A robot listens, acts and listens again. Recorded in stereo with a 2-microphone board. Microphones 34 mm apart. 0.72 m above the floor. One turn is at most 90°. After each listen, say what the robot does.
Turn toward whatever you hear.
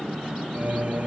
Turn 50° right.
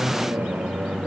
Turn 75° right.
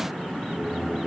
Found it: singing, straight ahead.